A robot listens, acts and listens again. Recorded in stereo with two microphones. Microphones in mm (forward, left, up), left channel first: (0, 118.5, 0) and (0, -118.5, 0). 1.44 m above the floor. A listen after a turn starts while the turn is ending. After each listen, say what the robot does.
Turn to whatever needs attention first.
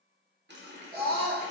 Turn 40° right.
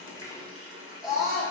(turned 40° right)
Found it: a scream, straight ahead.